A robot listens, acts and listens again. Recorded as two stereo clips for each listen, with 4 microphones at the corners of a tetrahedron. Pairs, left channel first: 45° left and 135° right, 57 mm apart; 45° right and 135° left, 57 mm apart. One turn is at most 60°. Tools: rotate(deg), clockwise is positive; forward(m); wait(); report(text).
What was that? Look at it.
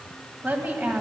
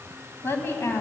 rotate(60)
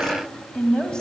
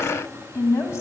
rotate(30)
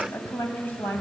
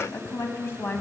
rotate(10)
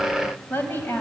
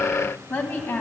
report("Found it: a woman speaking, straight ahead, 1 to 2 m away.")